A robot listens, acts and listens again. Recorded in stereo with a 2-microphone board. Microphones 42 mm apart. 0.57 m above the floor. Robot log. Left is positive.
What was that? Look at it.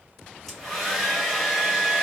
cmd yaw +30
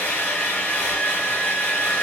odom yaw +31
note: So it is at 145° left.
cmd yaw +145
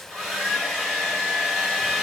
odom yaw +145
end: Facing the hair dryer.